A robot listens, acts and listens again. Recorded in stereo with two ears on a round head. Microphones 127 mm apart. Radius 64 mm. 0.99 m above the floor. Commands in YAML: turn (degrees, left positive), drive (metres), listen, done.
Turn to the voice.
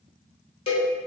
listen: true
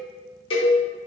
listen: true
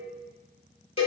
done: "I can't make out anyone speaking to turn to."